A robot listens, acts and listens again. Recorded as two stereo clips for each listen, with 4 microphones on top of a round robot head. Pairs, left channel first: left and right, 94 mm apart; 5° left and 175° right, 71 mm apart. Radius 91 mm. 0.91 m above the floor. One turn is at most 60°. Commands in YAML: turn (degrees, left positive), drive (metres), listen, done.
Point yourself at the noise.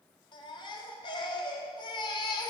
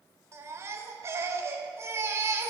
turn: 60
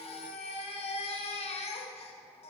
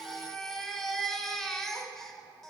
turn: 60
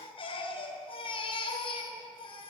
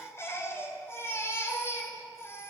turn: 60
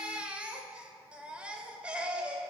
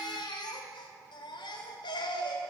turn: -10
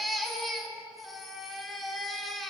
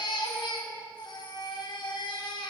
done: "Facing the baby crying."